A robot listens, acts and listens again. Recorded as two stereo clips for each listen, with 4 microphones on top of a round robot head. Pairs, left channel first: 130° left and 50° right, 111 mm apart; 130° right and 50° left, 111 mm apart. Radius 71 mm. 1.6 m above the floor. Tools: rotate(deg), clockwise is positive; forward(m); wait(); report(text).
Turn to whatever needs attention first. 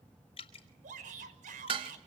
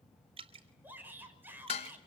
rotate(30)
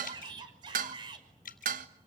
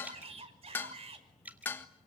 report("Found it: a shout, straight ahead, over 4 m away.")